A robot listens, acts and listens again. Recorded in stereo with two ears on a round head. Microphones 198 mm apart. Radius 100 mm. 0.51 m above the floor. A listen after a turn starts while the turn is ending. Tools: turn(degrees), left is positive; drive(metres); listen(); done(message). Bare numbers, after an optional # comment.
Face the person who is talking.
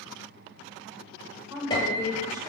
# The woman speaking: about 15° right or 165° right.
turn(-15)
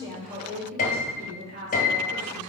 # So it is at 130° right.
turn(-130)
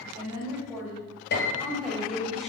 done("Facing the woman speaking.")